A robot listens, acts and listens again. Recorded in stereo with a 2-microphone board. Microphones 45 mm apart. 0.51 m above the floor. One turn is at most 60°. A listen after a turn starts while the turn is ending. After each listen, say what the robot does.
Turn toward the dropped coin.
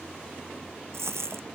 Turn 60° right.
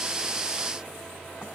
Keep listening.
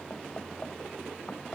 I heard a dropped coin, but can't make it out now. It was about 10° right or 50° right.